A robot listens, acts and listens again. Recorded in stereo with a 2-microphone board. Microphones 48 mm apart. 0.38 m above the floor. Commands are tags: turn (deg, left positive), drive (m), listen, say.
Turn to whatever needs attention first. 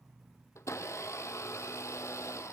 <listen/>
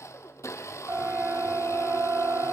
<turn deg="-50"/>
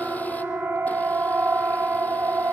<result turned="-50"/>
<turn deg="-60"/>
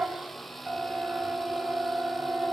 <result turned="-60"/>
<turn deg="-30"/>
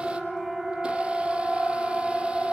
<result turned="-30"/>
<say>Facing the siren.</say>